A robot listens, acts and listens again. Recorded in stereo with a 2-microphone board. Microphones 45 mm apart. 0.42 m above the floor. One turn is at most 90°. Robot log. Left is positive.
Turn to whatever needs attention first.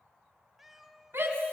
note: The shout: about 65° right or 115° right.
cmd yaw -65
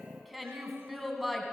end: Found it: a shout, straight ahead.